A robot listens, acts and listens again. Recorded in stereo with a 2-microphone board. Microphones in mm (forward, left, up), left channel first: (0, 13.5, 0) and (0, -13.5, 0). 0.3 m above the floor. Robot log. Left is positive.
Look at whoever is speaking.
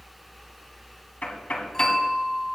cmd idle
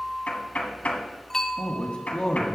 note: The man speaking: about 45° left or 135° left.
cmd yaw +45
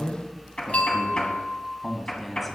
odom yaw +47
end: Found it: a man speaking, straight ahead, 1 to 2 m away.